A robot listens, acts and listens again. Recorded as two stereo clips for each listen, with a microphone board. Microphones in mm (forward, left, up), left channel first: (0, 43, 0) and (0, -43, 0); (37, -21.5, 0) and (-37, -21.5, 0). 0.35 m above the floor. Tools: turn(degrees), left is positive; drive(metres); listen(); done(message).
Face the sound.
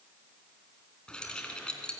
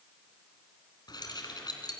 turn(degrees=10)
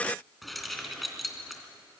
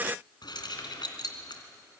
done("Found it: keys jangling, straight ahead, 2 to 4 m away.")